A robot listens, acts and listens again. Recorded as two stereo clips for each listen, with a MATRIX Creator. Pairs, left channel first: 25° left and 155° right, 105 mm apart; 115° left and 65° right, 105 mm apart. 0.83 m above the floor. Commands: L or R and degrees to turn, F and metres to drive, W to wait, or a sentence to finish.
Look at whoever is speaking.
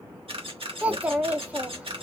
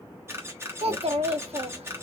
R80
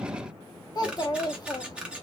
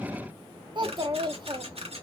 R25
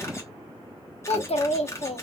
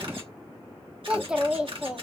L15
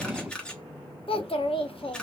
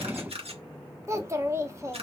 Facing the child speaking.